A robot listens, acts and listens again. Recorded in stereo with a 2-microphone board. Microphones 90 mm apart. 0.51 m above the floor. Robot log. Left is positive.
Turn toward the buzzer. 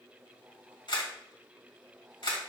cmd idle
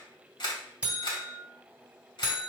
note: The buzzer: about 15° right or 165° right.
cmd yaw -15
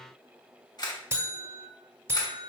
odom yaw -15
note: So it is at 150° right.
cmd yaw -150
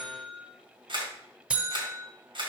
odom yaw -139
note: The buzzer is now 10° right.
cmd yaw -10
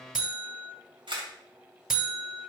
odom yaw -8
end: Found it: a buzzer, straight ahead.